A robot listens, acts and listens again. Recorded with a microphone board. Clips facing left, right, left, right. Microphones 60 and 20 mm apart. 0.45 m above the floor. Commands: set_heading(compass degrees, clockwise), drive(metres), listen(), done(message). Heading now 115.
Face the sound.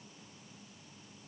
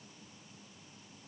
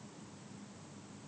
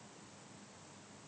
listen()
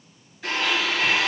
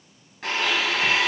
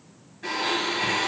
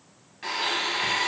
set_heading(185)
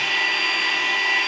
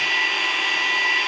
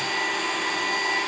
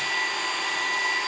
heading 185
done("Found it: a blender, straight ahead, 2 to 4 m away.")